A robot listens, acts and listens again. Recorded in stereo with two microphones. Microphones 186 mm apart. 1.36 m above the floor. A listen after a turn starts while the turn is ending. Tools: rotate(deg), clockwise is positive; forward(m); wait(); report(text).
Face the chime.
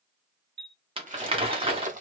rotate(65)
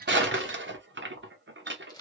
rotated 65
wait()
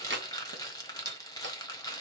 wait()
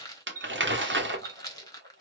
rotate(15)
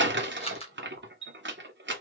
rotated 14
report("Facing the chime.")